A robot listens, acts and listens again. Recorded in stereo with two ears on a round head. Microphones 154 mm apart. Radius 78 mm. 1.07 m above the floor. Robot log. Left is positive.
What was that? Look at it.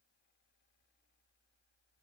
cmd idle
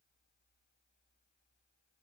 cmd idle
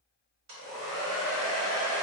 cmd yaw -90
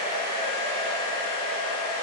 end: Found it: a hair dryer, straight ahead, 1 to 2 m away.